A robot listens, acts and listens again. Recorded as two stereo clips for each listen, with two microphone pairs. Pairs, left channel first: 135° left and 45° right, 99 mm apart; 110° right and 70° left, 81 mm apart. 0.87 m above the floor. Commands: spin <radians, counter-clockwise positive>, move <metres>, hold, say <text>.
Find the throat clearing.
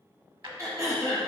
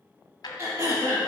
spin 0.26
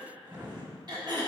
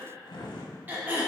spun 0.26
say Found it: throat clearing, straight ahead, 1 to 2 m away.